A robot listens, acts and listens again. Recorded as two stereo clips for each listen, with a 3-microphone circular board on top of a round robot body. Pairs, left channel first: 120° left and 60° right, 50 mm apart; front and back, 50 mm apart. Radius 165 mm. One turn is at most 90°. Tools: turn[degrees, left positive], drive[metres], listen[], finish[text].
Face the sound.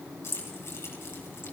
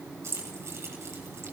Thought: The keys jangling: 155° left.
Action: turn[90]
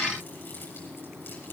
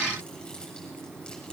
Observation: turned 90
Thought: Nothing new. It was at 65° left.
Action: turn[65]
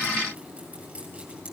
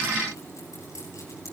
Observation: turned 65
Action: listen[]
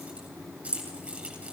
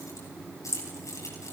Action: finish[Found it: keys jangling, straight ahead, over 4 m away.]